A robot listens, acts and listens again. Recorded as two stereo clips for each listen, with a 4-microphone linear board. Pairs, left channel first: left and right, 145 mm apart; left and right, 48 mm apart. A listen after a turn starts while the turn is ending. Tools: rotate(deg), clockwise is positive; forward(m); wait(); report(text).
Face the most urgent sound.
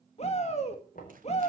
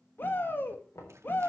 rotate(-45)
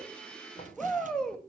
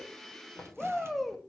report("Found it: a shout, straight ahead, 2 to 4 m away.")